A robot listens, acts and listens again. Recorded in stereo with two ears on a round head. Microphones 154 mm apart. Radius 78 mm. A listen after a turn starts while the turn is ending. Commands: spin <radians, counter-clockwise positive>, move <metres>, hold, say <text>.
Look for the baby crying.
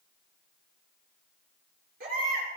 spin -1.05
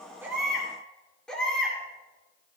say Found it: a baby crying, straight ahead, over 4 m away.